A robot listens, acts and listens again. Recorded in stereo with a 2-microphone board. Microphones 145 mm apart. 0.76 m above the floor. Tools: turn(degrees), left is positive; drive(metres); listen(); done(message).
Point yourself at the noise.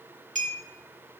turn(degrees=-60)
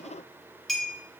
done("Facing the clink, 1 to 2 m away.")